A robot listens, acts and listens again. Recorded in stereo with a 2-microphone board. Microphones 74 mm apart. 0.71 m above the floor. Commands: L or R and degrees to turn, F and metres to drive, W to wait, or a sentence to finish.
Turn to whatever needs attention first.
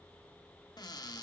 W
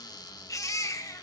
L50
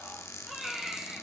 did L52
Found it: a baby crying, straight ahead, 1 to 2 m away.